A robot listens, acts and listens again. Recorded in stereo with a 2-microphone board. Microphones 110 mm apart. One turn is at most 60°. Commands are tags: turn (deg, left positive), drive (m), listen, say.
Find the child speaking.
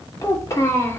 <turn deg="25"/>
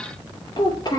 <turn deg="40"/>
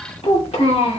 <turn deg="60"/>
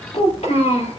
<turn deg="60"/>
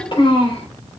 <turn deg="55"/>
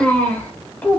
<turn deg="15"/>
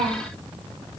<say>Found it: a child speaking, straight ahead.</say>